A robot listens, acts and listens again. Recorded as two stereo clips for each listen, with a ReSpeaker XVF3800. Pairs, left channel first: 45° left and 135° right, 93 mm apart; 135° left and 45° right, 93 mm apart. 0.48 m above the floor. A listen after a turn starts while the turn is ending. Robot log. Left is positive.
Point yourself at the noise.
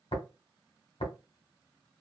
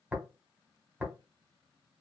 note: The tapping: 30° left.
cmd yaw +30
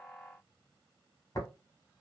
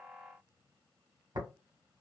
end: Facing the tapping.